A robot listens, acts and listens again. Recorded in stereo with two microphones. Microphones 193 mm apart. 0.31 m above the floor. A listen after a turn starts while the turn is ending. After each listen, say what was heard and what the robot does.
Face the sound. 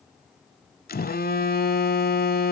The phone buzzing: about 50° left or 130° left. Turn 50° left.
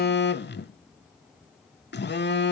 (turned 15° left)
So it is at 115° left. Turn 115° left.
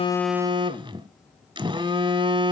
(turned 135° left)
The phone buzzing is now 25° right. Turn 25° right.
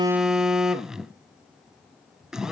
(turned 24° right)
Found it: a phone buzzing, straight ahead.